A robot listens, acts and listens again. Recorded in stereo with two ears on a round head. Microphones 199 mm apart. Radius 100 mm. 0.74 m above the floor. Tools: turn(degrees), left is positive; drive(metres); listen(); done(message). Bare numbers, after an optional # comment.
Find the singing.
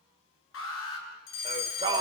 # The singing: about 20° right or 160° right.
turn(-20)
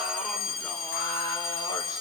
listen()
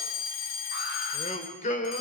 # So it is at 35° left.
turn(35)
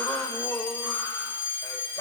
# The singing is now 15° left.
turn(15)
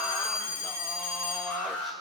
listen()
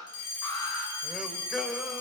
done("Facing the singing, 2 to 4 m away.")